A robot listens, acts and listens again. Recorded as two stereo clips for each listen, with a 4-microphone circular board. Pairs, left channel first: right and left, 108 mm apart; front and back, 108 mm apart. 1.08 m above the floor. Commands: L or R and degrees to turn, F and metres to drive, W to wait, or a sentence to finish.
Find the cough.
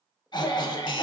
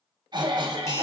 R135
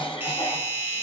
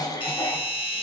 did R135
R55
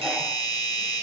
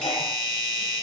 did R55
W
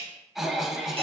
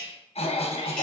Facing the cough, under 1 m away.